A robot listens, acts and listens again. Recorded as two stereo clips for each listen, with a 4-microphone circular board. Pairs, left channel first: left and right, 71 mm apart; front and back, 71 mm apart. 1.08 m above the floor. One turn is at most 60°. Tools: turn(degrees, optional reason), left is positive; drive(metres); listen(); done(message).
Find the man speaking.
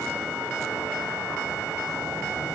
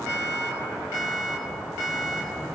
listen()
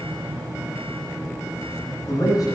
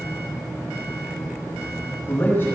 turn(degrees=55, reason="The man speaking: 55° left.")
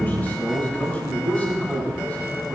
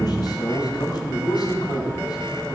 turn(degrees=15, reason="The man speaking is now 15° left.")
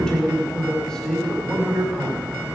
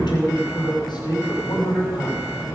done("Found it: a man speaking, straight ahead.")